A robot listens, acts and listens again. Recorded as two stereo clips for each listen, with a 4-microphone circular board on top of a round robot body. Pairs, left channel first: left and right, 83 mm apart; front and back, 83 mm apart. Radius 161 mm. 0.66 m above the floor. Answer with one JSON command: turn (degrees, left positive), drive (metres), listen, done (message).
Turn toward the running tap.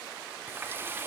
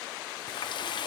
{"turn": -25}
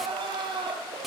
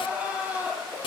{"done": "Found it: a running tap, straight ahead, 1 to 2 m away."}